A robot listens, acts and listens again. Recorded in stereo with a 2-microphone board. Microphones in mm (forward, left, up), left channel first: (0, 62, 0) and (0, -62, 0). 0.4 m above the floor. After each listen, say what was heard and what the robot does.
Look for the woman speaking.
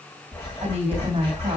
The woman speaking: about 55° right or 125° right. Turn 55° right.
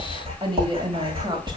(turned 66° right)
So it is at 40° right. Turn 40° right.
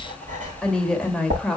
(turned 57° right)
Found it: a woman speaking, straight ahead, 1 to 2 m away.